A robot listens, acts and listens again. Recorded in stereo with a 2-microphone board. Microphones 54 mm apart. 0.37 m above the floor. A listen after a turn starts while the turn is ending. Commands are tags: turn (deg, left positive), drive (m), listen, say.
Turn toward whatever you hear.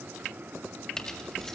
<turn deg="30"/>
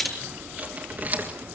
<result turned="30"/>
<turn deg="-30"/>
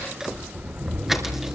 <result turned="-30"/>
<turn deg="-10"/>
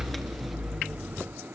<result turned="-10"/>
<say>Facing the keys jangling, 2 to 4 m away.</say>